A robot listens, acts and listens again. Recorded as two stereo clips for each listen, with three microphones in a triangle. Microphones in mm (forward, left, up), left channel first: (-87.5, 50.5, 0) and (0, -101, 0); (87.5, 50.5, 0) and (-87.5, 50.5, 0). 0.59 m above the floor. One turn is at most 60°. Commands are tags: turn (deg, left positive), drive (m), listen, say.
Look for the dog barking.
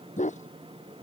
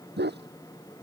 <turn deg="60"/>
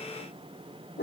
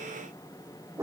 <turn deg="60"/>
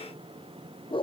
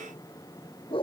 <turn deg="60"/>
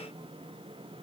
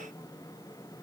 <listen/>
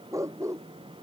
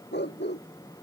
<turn deg="15"/>
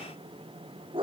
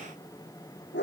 <say>Found it: a dog barking, straight ahead.</say>